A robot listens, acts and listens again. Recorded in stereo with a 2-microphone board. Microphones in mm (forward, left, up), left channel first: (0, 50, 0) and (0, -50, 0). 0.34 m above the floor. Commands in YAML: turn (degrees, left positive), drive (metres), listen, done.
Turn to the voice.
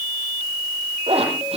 listen: true
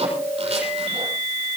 listen: true
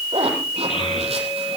turn: 65
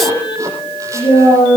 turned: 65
turn: 50
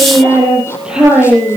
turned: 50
turn: -10
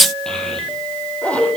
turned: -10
done: "Facing the child speaking, over 4 m away."